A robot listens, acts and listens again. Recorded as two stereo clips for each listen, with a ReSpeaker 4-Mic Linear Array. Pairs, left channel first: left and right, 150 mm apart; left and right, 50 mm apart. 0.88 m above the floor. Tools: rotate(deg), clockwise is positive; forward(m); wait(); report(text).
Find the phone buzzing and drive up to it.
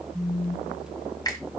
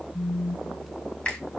rotate(-20)
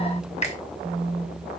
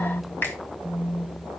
forward(1.0)
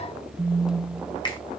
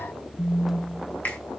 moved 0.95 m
forward(1.0)
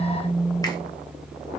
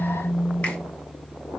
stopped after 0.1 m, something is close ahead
report("I am next to the phone buzzing.")